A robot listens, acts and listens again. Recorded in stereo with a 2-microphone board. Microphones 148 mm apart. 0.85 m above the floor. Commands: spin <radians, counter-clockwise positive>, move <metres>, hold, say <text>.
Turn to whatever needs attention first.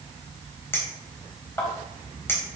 hold
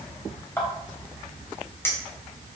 hold
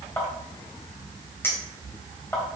say I can't make out anything urgent, only a clink.